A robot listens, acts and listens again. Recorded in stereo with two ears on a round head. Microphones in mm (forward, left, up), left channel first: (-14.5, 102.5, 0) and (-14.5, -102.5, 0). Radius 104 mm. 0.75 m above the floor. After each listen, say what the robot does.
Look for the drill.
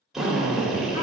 Turn 30° right.
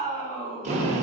Turn 145° right.
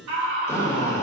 Turn 15° left.
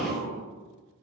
Facing the drill.